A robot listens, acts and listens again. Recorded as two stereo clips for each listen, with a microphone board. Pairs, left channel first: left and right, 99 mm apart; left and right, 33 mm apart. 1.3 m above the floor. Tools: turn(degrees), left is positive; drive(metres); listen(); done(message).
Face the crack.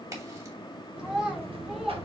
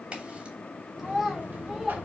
turn(degrees=-30)
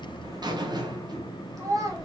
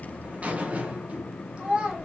listen()
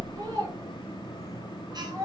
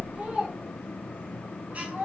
done("I heard a crack, but can't make it out now. It was about straight ahead or 120° right.")